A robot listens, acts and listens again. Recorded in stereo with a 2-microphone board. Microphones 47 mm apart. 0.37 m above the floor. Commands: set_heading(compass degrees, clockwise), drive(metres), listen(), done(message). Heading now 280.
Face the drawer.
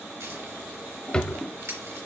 set_heading(260)
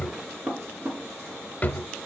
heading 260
set_heading(125)
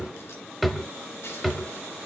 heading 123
done("Facing the drawer.")